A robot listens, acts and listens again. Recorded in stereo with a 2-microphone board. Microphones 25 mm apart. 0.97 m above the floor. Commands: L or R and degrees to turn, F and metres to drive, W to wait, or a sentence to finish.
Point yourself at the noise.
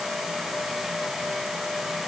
W
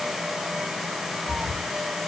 W
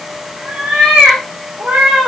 R90
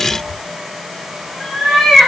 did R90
R15
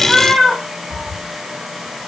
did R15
Found it: a cat meowing, straight ahead, over 4 m away.